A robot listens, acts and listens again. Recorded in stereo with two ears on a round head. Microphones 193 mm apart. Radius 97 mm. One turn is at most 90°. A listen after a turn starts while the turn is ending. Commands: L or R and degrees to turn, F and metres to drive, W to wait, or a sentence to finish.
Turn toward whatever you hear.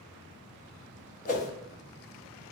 L35
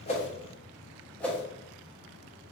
Found it: a whoosh, straight ahead.